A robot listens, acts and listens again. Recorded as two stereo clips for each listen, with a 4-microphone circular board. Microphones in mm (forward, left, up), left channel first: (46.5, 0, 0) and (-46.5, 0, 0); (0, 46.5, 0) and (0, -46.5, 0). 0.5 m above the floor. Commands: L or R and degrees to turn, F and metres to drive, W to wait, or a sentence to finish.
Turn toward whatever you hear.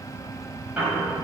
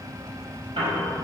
R105
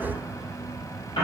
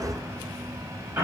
R20
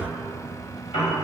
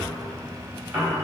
Facing the piano.